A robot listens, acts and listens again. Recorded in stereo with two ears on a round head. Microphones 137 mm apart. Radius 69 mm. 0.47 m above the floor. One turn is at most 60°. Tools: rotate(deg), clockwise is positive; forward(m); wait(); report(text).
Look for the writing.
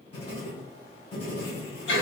rotate(-40)
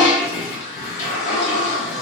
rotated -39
wait()
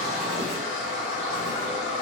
wait()
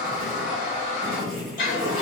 report("Found it: writing, straight ahead.")